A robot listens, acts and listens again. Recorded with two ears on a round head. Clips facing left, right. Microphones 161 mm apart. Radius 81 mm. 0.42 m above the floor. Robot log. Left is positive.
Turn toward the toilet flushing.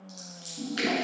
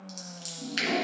note: The toilet flushing: about 50° left or 130° left.
cmd yaw +50
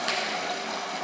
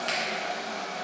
note: So it is at 80° left.
cmd yaw +80
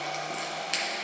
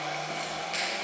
end: Facing the toilet flushing, under 1 m away.